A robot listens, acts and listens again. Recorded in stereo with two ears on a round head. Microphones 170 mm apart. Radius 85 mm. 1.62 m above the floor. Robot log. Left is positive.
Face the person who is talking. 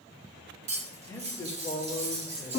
note: The man speaking: about 15° left or 165° left.
cmd yaw +15
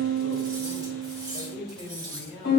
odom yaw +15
note: The man speaking: about 35° left or 145° left.
cmd yaw +35
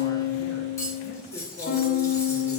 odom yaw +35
cmd idle
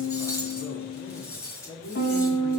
note: So it is at 105° left.
cmd yaw +105
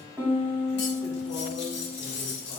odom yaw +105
cmd idle
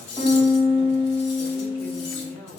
note: The man speaking is now 15° left.
cmd yaw +15
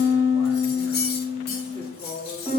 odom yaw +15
end: Found it: a man speaking, straight ahead, over 4 m away.